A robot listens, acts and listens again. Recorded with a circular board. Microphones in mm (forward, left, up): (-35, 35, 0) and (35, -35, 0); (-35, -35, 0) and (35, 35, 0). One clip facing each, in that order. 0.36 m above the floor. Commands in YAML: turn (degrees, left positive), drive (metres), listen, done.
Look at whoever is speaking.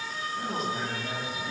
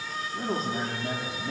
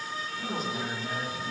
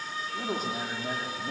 turn: 15
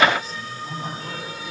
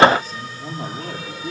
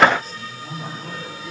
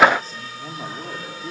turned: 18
done: "Facing the man speaking, over 4 m away."